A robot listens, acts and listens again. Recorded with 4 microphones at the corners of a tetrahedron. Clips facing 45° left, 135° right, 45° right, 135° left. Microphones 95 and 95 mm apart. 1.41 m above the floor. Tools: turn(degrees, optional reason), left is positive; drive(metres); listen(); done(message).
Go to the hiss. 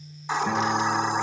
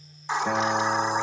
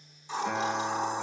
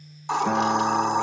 turn(degrees=135, reason="The hiss: 135° left.")
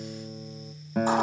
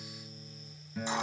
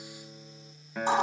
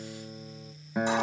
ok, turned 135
listen()
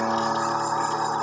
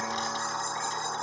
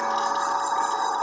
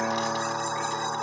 drive(metres=1.0)
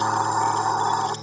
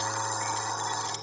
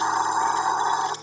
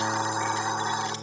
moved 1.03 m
turn(degrees=10, reason="The hiss is now 10° left.")
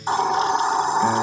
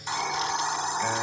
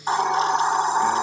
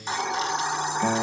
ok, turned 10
drive(metres=1.0)
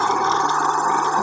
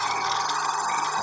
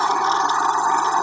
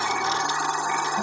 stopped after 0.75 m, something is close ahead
done("I am next to the hiss.")